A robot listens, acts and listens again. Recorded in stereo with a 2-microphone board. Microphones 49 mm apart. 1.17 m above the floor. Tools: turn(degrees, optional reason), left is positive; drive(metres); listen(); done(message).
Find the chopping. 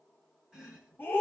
turn(degrees=-30)
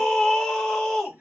turn(degrees=-135, reason="So it is at 135° right.")
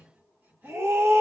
turn(degrees=-50, reason="The chopping is now 50° right.")
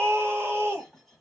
done("Facing the chopping.")